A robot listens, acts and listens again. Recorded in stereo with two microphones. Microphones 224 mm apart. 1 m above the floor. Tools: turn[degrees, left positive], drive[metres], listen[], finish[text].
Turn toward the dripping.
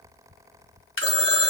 Thought: The dripping: about 65° left or 115° left.
Action: turn[65]
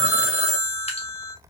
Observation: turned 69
Action: listen[]
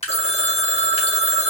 Thought: So it is at 30° left.
Action: turn[30]
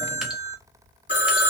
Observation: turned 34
Action: listen[]
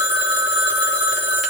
Action: listen[]
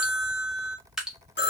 Action: finish[Found it: dripping, straight ahead, 1 to 2 m away.]